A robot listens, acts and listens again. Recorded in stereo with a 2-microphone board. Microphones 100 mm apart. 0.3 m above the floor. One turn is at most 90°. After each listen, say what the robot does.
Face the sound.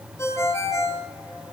Turn 25° left.
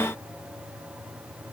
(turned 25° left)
Keep listening.
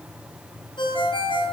Turn 90° left.
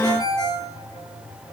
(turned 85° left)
Turn 45° left.
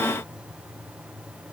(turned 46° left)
Keep listening.
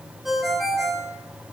Facing the ringtone.